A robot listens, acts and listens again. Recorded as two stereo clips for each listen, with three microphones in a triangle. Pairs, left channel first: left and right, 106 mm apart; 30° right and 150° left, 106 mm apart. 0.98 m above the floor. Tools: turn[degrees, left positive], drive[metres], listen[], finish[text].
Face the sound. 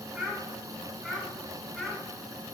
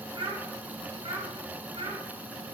Thought: The child speaking: straight behind.
Action: turn[180]
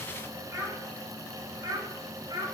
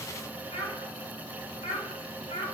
Thought: The child speaking is now 45° right.
Action: turn[-45]
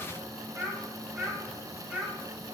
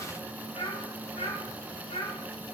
Thought: The child speaking is now 10° right.
Action: turn[-10]
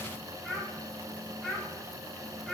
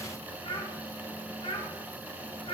Action: finish[Found it: a child speaking, straight ahead.]